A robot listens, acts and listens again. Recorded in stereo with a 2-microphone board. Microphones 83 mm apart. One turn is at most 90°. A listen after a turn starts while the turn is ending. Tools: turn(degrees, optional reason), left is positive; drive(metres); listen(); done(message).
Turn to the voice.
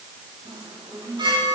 listen()
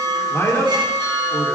turn(degrees=35, reason="The man speaking: about 35° left or 145° left.")
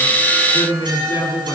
turn(degrees=90, reason="So it is at 105° left.")
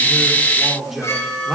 done("Found it: a man speaking, straight ahead, over 4 m away.")